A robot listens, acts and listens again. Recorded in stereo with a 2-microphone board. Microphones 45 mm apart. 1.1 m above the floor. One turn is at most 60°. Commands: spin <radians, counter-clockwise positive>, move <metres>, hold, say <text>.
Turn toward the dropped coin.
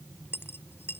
spin 0.96
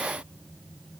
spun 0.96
hold
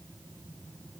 say I heard a dropped coin, but can't make it out now. It was about straight ahead or 70° left.